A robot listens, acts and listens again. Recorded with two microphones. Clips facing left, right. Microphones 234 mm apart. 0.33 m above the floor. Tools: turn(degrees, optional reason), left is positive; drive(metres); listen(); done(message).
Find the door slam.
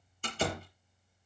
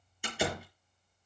turn(degrees=-30)
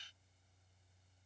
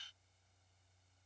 listen()
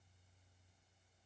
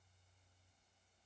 done("I heard a door slam, but can't make it out now. It was about 20° left or 140° right.")